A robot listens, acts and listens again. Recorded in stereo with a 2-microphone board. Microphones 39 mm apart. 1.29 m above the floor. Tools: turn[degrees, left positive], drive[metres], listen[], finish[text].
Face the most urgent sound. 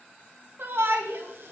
Thought: The shout: about 65° right or 115° right.
Action: turn[-65]
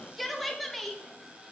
Action: finish[Facing the shout.]